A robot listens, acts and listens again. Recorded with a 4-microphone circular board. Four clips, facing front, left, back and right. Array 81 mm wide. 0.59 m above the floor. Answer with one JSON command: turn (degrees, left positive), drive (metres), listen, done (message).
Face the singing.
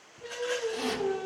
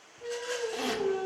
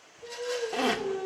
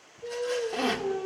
{"turn": 60}
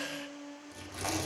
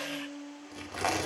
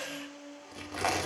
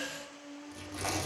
{"turn": -10}
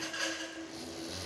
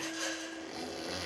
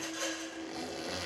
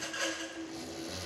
{"done": "Found it: singing, straight ahead, over 4 m away."}